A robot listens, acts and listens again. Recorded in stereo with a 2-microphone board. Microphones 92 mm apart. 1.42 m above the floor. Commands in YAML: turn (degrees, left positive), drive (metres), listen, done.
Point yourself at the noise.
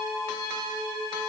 listen: true
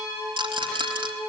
turn: -70
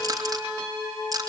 turn: -40
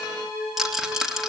done: "Facing the rattle, 2 to 4 m away."